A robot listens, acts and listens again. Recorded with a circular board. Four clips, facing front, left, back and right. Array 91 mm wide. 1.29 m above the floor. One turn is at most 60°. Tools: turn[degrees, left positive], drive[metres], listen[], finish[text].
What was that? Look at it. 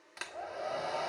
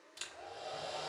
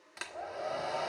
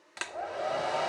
Thought: The hair dryer: 90° right.
Action: turn[-60]
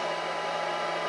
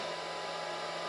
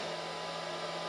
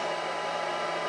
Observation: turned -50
Thought: The hair dryer is now 40° right.
Action: turn[-40]
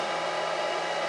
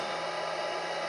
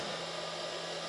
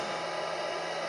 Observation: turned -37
Action: finish[Facing the hair dryer, 1 to 2 m away.]